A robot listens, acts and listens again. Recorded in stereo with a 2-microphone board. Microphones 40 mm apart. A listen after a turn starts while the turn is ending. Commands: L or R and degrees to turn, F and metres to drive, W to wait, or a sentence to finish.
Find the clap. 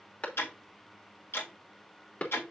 L40
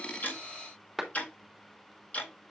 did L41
Found it: a clap, straight ahead.